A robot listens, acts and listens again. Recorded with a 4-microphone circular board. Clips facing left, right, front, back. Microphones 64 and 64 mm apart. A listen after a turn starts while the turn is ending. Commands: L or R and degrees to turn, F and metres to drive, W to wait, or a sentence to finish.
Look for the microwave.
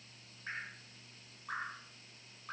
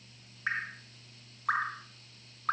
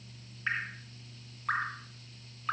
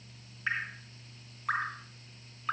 W
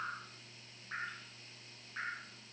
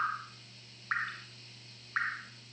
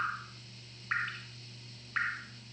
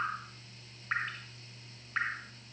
W
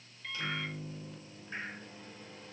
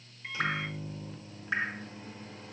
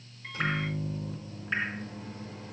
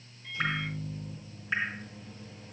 R20
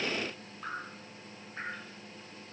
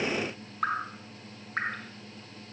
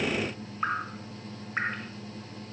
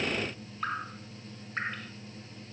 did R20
Found it: a microwave, straight ahead.